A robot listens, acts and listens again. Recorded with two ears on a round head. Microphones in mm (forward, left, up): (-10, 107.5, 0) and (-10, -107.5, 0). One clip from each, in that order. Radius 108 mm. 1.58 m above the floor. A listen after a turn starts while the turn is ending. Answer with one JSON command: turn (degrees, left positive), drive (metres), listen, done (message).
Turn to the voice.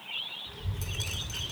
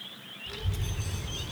{"turn": -75}
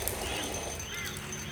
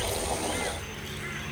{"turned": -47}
{"turn": -45}
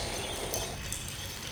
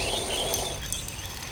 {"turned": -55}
{"turn": 10}
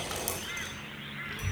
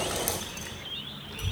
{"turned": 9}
{"done": "Facing the child speaking."}